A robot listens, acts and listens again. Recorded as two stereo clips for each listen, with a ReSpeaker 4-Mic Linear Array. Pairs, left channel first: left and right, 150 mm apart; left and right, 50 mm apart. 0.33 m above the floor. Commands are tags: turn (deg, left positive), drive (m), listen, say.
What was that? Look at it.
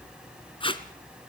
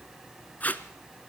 <turn deg="35"/>
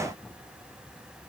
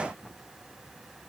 <listen/>
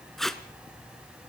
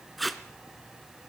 <say>Found it: tape being pulled, straight ahead.</say>